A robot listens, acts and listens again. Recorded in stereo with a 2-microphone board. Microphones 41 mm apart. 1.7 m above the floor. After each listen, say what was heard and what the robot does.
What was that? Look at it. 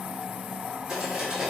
Turn 30° right.
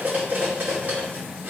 So it is at 140° right. Turn 140° right.
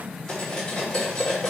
The cutlery clinking is now 15° left. Turn 15° left.
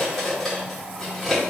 Found it: cutlery clinking, straight ahead.